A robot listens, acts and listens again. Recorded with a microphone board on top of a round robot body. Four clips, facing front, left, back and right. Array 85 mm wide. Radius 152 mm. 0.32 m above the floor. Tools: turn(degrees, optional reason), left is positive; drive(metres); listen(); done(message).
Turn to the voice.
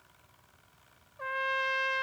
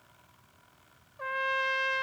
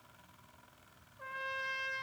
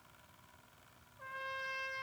listen()
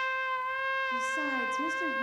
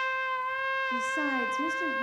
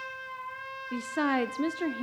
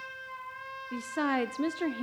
turn(degrees=-120, reason="The woman speaking: 120° right.")
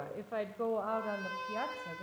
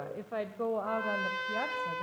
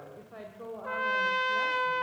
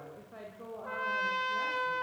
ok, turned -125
turn(degrees=60, reason="The woman speaking is now 60° left.")
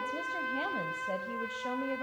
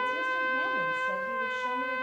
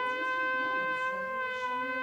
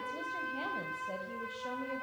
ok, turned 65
listen()
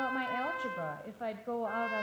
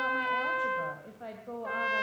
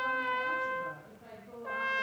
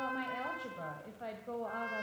done("Found it: a woman speaking, straight ahead, 2 to 4 m away.")